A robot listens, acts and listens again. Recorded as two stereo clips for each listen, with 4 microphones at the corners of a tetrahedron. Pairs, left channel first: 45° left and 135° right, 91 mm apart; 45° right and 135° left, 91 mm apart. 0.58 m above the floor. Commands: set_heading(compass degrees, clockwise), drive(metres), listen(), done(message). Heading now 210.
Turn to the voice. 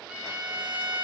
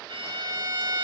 listen()
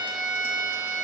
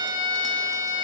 listen()
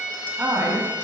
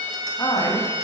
set_heading(280)
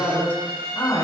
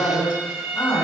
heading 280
done("Found it: a man speaking, straight ahead, over 4 m away.")